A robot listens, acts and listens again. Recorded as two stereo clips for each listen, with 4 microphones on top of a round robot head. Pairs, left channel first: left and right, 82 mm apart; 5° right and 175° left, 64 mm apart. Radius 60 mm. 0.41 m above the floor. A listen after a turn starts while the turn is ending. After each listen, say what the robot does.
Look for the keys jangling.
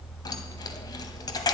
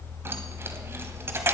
Turn 130° left.
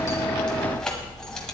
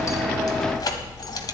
Facing the keys jangling, 1 to 2 m away.